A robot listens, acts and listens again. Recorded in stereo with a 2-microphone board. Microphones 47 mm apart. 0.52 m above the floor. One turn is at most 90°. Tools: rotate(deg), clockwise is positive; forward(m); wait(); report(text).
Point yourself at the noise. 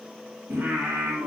rotate(50)
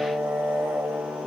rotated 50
rotate(75)
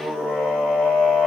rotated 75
report("Found it: singing, straight ahead, over 4 m away.")